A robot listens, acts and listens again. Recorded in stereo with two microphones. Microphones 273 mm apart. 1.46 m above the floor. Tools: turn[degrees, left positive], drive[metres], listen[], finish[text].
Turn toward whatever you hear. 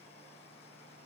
Action: listen[]
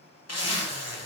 Thought: The zipper: about 60° left or 120° left.
Action: turn[60]
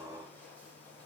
Action: listen[]
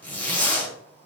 Action: finish[Facing the zipper.]